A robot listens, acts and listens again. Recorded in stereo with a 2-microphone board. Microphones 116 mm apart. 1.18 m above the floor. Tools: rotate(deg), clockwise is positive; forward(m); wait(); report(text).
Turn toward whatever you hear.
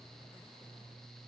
wait()
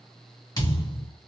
rotate(-30)
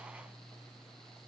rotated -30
wait()
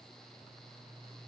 report("I heard a thud, but can't make it out now. It was about straight ahead or 120° left.")